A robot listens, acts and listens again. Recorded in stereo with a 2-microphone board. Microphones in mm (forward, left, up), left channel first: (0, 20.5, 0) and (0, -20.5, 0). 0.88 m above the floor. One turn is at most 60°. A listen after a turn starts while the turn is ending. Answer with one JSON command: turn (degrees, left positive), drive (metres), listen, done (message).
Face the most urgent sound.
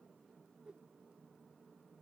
{"listen": true}
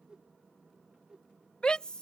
{"turn": 25}
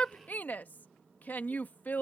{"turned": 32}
{"turn": 60}
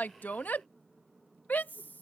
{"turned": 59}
{"turn": 60}
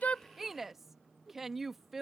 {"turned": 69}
{"turn": -10}
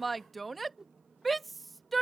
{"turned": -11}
{"done": "Facing the shout."}